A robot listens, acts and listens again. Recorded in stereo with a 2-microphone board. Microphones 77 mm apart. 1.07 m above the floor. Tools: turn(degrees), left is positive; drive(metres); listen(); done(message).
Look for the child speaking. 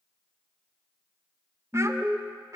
turn(degrees=-45)
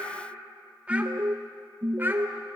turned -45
turn(degrees=-25)
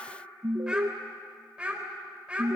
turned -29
turn(degrees=-15)
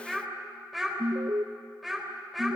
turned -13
done("Found it: a child speaking, straight ahead.")